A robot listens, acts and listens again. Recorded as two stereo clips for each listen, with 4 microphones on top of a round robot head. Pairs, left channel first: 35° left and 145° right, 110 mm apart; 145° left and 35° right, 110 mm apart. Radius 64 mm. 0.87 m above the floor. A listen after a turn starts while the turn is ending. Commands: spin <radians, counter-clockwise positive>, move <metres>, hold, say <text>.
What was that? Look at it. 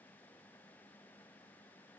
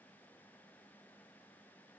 hold
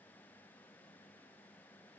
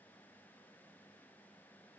hold
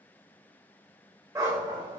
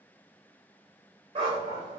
spin -1.48
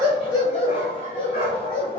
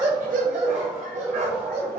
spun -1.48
spin -0.35
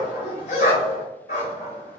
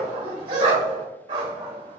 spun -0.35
say Facing the dog barking.